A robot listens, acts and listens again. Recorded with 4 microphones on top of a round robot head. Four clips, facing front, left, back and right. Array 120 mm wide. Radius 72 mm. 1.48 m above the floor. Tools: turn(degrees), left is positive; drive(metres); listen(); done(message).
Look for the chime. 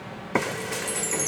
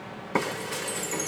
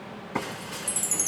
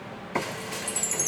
turn(degrees=-100)
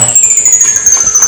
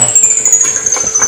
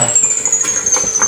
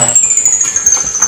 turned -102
done("Facing the chime, under 1 m away.")